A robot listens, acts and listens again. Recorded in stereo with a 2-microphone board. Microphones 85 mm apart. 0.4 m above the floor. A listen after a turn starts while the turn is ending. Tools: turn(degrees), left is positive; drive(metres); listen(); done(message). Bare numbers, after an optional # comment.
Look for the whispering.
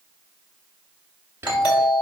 # The whispering: about 25° right or 155° right.
turn(-25)
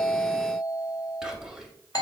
done("Facing the whispering.")